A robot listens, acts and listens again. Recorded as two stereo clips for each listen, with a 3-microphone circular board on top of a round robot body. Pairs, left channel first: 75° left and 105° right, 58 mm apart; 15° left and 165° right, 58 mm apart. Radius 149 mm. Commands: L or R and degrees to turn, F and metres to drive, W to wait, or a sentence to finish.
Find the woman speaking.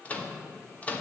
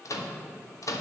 W
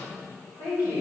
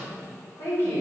L60
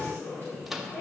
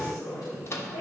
L25
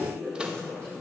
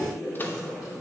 Facing the woman speaking, over 4 m away.